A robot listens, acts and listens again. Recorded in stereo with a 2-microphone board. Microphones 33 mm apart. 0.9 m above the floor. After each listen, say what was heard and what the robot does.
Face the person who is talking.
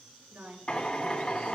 The woman speaking: about 70° right or 110° right. Turn 70° right.
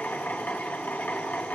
Keep listening.
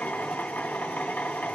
Keep listening.
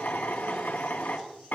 I heard a woman speaking, but can't make it out now. It was about straight ahead or 40° right.